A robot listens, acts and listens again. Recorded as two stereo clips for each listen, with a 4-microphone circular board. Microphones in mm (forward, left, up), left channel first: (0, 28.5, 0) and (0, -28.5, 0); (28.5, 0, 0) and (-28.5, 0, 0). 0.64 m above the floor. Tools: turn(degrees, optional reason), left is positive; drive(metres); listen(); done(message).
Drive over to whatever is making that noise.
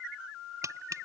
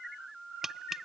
turn(degrees=-100, reason="The tapping: 100° right.")
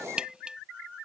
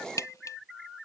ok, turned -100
turn(degrees=-20, reason="The tapping is now 20° right.")
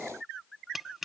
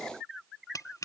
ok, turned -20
drive(metres=1.0)
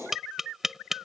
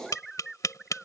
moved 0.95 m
drive(metres=1.0)
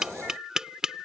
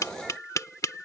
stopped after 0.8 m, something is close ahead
turn(degrees=-15, reason="The tapping is now 15° right.")
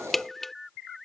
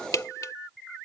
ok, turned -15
done("I am next to the tapping.")